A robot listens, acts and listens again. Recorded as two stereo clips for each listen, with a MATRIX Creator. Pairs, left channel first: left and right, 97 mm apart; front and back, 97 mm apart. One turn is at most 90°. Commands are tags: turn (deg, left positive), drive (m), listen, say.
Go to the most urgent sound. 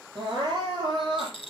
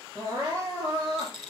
<turn deg="-90"/>
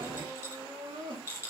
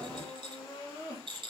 <turn deg="-65"/>
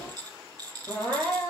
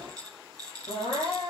<turn deg="10"/>
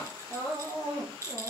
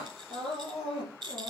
<drive m="1.0"/>
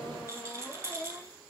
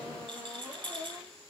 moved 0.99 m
<listen/>
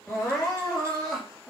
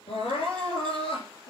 <drive m="1.0"/>
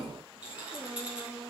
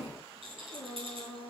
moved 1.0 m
<drive m="1.0"/>
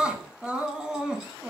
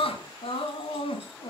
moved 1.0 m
<turn deg="-10"/>
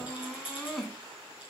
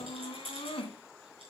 <drive m="1.0"/>
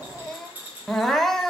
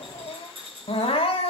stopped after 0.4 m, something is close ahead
<say>Arrived at the crying, straight ahead.</say>